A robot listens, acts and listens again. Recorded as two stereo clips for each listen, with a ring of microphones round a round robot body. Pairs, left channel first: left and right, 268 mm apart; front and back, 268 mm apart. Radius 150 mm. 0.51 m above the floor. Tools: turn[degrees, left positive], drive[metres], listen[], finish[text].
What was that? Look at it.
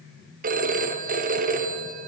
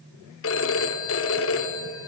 Thought: The phone ringing: 35° right.
Action: turn[-35]
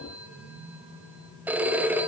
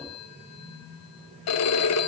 Action: finish[Found it: a phone ringing, straight ahead, 1 to 2 m away.]